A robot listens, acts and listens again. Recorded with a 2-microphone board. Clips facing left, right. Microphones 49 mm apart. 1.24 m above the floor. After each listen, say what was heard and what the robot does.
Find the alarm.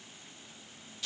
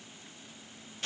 Keep listening.
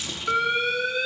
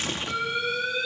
The alarm: about 55° left or 125° left. Turn 55° left.
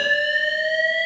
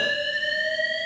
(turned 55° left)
So it is at 70° left. Turn 70° left.
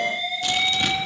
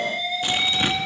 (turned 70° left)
The alarm is now 30° left. Turn 30° left.
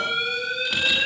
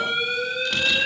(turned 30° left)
Found it: an alarm, straight ahead.